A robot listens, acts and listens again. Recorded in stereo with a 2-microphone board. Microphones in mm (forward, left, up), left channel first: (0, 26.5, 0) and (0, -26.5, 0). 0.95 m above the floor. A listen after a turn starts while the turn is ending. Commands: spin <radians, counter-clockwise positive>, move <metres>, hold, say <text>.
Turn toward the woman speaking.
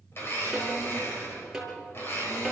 hold
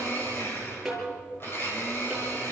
hold
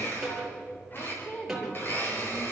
spin 0.44
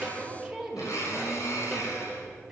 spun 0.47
spin -0.26
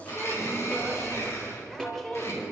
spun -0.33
say Found it: a woman speaking, straight ahead, 2 to 4 m away.